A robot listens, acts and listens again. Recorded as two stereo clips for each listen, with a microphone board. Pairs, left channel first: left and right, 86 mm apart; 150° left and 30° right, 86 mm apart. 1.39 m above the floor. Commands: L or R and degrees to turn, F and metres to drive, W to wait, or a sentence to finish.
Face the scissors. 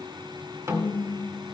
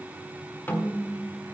W
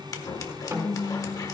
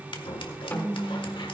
L135
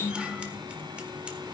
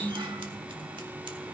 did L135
W
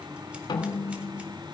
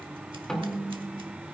W
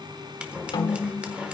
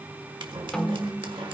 R15
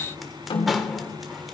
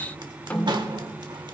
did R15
Facing the scissors.